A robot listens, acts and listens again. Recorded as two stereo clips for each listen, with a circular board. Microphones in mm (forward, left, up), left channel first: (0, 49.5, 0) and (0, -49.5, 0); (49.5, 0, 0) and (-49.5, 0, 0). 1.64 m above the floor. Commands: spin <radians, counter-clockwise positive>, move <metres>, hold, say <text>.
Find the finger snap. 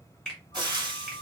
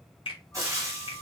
spin 0.17
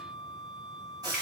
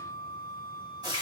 hold
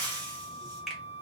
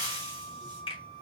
say Found it: a finger snap, straight ahead.